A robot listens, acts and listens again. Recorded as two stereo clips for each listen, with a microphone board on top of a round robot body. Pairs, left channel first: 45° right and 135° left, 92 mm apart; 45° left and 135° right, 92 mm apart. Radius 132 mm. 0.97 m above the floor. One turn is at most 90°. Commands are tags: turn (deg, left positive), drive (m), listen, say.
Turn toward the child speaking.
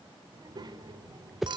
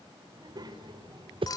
<turn deg="-90"/>
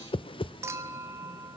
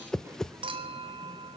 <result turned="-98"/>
<turn deg="-80"/>
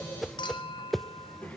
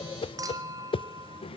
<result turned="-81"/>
<turn deg="30"/>
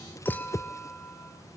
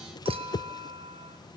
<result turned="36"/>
<say>Found it: a child speaking, straight ahead.</say>